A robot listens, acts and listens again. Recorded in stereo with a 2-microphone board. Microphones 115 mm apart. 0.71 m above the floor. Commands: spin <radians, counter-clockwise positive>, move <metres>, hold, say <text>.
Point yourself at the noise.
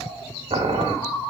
spin -1.57
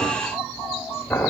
spin 0.17
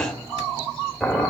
say Found it: boiling, straight ahead.